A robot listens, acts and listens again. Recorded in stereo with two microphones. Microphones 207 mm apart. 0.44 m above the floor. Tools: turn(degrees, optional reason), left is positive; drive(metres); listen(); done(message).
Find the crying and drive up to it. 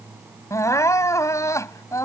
turn(degrees=30)
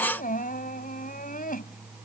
turn(degrees=135, reason="So it is at 135° left.")
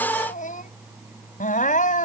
turn(degrees=45, reason="The crying is now 45° left.")
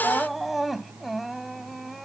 drive(metres=1.0)
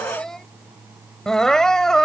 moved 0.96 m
drive(metres=1.0)
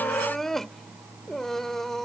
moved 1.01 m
drive(metres=1.0)
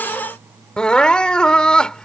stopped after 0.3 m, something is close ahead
done("I am next to the crying.")